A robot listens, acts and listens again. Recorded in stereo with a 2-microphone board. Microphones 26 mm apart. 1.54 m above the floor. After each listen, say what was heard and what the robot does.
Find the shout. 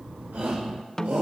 Turn 90° right.
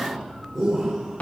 Found it: a shout, straight ahead.